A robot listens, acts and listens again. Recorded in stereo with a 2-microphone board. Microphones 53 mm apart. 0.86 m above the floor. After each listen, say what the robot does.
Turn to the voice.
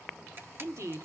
Turn 55° right.
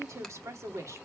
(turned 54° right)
Turn 65° right.
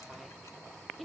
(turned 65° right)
Found it: a woman speaking, straight ahead, 1 to 2 m away.